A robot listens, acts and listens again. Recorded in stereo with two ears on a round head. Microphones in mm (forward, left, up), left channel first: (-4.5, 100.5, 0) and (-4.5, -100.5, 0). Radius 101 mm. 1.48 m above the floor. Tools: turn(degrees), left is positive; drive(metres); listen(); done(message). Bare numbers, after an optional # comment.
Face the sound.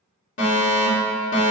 # The fire alarm: about 55° left or 125° left.
turn(55)
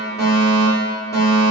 # So it is at 15° left.
turn(15)
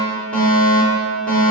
done("Found it: a fire alarm, straight ahead.")